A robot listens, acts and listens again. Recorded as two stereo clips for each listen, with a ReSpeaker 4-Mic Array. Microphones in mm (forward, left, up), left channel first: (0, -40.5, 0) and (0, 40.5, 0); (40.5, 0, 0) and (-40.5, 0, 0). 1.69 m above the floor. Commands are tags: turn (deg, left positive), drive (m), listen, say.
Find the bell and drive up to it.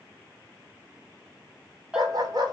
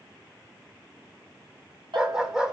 <turn deg="165"/>
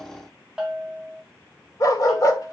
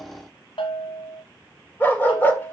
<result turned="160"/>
<drive m="1.0"/>
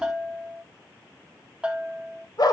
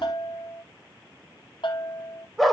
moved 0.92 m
<turn deg="10"/>
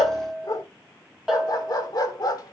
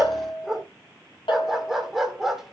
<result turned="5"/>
<drive m="1.0"/>
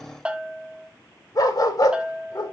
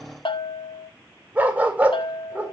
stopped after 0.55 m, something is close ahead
<turn deg="10"/>
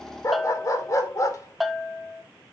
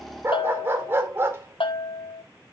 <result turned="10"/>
<say>Arrived at the bell, straight ahead.</say>